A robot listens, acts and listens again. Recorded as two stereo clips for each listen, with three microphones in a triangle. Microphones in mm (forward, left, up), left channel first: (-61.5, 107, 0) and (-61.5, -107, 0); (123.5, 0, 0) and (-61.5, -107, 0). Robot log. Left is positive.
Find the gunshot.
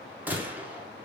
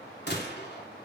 note: The gunshot: 10° right.
cmd yaw -10
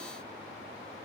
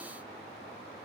end: Facing where the gunshot came from. I can't hear it now.